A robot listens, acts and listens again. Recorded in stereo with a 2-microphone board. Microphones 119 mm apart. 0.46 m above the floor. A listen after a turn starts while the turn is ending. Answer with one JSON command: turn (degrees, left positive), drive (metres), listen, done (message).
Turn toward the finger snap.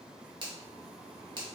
{"turn": -40}
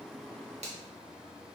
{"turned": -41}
{"turn": -90}
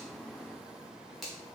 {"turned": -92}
{"done": "Facing the finger snap, 1 to 2 m away."}